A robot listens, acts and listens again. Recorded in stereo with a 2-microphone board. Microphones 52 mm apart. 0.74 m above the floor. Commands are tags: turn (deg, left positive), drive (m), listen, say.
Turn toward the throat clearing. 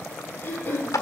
<turn deg="35"/>
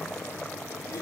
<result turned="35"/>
<listen/>
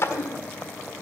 <turn deg="105"/>
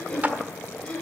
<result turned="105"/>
<turn deg="20"/>
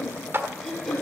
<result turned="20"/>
<say>Found it: throat clearing, straight ahead.</say>